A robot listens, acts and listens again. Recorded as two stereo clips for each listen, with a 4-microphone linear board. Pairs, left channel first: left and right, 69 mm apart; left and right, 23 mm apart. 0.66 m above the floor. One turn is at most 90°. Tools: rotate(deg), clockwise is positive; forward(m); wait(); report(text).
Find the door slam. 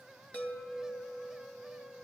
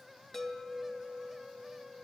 wait()
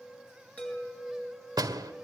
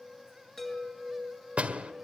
rotate(75)
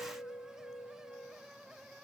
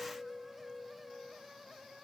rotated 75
wait()
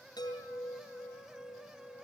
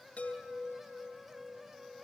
report("I heard a door slam, but can't make it out now. It was about straight ahead or 30° right.")